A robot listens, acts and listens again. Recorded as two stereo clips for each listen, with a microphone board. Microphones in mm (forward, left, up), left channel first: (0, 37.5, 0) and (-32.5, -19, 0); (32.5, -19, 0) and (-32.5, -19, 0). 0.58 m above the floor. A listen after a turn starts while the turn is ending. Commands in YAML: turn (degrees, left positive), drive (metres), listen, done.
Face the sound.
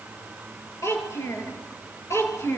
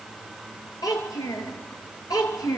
turn: 15
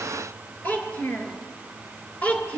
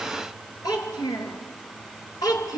turn: -10
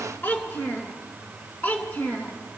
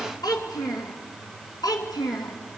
done: "Found it: a child speaking, straight ahead, 2 to 4 m away."